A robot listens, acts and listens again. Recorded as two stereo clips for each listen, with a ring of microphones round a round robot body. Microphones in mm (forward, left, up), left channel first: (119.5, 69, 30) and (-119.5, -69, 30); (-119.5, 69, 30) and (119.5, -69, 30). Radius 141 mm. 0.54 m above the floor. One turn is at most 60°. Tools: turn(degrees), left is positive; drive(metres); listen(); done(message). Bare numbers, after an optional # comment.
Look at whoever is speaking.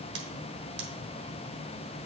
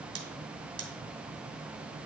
listen()
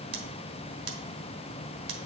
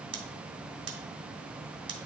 listen()
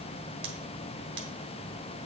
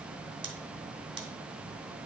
done("I can't make out anyone speaking to turn to.")